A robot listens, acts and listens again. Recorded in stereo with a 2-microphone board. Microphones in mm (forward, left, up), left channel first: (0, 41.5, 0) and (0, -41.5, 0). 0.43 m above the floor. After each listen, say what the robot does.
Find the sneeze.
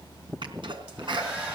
Turn 75° right.
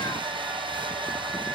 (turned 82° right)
Keep listening.
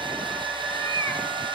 I heard a sneeze, but can't make it out now. It was about 10° left or 25° right.